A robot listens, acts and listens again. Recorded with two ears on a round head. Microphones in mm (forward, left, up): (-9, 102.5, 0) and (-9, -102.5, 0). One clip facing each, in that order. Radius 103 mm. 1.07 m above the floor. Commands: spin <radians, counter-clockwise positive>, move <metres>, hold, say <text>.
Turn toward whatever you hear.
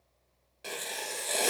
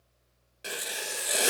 spin -0.52
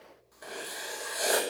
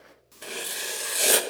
spin -2.36
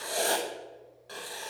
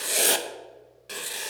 spin -0.61
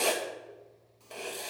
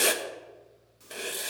spin -0.35
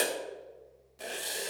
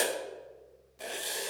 say Found it: writing, straight ahead, 1 to 2 m away.